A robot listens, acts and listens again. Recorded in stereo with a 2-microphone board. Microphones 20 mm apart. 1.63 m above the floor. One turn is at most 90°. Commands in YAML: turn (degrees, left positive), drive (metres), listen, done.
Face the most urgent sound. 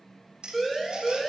turn: 30
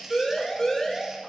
turn: 90
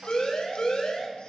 turn: 50
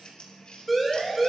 done: "Facing the siren."